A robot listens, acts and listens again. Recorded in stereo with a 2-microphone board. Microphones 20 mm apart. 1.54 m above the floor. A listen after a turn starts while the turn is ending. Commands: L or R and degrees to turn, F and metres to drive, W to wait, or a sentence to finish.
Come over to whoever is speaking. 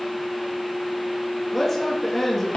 L30
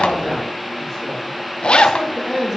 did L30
R25
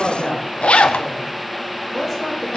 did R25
F1.0
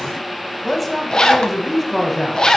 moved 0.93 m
F1.0
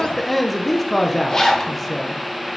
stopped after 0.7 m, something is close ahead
I am next to the man speaking.